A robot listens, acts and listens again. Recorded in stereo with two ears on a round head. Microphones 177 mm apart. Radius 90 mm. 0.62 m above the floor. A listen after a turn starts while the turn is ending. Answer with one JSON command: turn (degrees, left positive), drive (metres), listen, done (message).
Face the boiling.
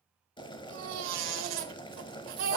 {"turn": 25}
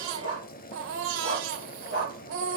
{"turn": 130}
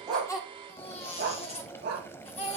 {"turn": 15}
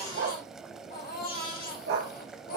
{"done": "Found it: boiling, straight ahead."}